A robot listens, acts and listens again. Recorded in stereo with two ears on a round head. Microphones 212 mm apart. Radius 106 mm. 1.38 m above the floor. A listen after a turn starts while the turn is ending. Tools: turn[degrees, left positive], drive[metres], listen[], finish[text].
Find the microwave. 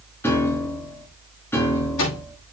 Thought: The microwave: about 65° left or 115° left.
Action: turn[65]
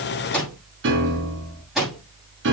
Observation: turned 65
Action: finish[Found it: a microwave, straight ahead, over 4 m away.]